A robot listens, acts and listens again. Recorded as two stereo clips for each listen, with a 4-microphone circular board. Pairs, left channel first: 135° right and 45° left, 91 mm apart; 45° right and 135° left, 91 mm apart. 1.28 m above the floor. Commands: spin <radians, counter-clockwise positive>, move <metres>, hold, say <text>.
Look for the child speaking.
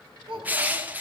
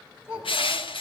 spin 0.35
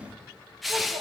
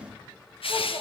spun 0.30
hold
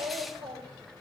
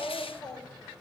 say Found it: a child speaking, straight ahead, 2 to 4 m away.